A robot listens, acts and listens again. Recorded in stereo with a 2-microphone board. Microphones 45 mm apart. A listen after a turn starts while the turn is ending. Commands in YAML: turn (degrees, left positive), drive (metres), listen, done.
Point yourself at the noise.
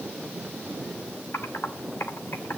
turn: 65
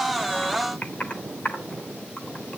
turn: 35
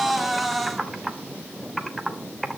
done: "Facing the typing on a keyboard."